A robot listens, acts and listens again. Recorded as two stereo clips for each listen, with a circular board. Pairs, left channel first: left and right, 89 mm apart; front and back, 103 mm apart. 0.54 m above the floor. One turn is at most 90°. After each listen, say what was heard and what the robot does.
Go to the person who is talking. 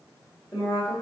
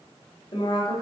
The woman speaking: 40° left. Turn 40° left.
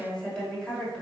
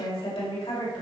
The woman speaking is now 10° left. Turn 10° left.
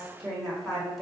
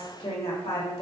Drive 1.0 m forward.
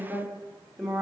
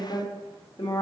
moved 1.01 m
Drive 1.0 m forward.
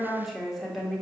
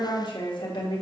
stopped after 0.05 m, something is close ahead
I am next to the woman speaking.